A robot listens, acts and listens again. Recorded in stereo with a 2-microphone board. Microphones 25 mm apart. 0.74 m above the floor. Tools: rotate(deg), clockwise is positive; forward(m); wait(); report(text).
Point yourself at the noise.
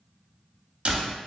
rotate(45)
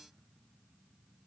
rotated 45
wait()
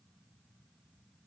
report("I heard a door slam, but can't make it out now. It was about straight ahead or 90° right.")